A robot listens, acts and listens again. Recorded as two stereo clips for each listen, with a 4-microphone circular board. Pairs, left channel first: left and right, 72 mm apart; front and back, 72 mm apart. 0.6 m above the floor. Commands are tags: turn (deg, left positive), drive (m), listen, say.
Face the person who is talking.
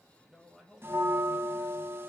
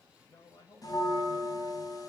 <say>Facing the man speaking.</say>